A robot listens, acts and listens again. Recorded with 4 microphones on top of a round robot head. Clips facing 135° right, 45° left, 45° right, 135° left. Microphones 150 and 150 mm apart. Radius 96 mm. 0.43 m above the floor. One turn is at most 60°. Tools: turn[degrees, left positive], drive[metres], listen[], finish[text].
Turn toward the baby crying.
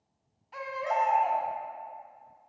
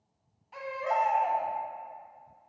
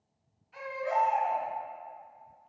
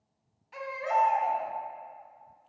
Thought: The baby crying: 135° left.
Action: turn[60]
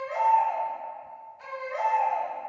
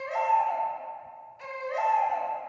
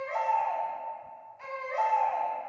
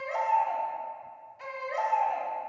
Thought: The baby crying is now 70° left.
Action: turn[60]
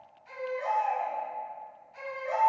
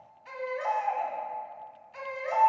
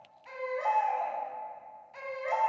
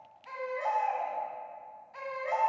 Thought: The baby crying is now 25° left.
Action: turn[25]
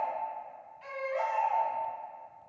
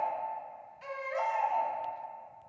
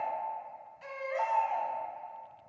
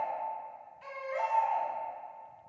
Action: finish[Facing the baby crying, 2 to 4 m away.]